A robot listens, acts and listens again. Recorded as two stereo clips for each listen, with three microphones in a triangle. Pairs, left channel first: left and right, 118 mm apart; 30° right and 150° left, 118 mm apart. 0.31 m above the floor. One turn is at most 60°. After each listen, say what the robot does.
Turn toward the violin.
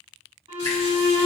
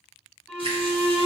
Turn 60° right.
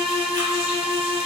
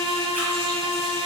Turn 30° right.
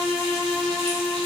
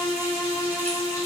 Found it: a violin, straight ahead.